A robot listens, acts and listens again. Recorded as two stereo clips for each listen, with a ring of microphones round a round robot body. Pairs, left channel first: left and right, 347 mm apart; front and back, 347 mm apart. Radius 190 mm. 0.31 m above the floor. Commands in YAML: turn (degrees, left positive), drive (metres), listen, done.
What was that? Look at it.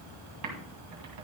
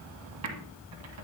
turn: -130
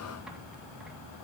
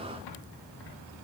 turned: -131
listen: true
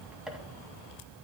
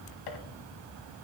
done: "Facing the typing on a keyboard."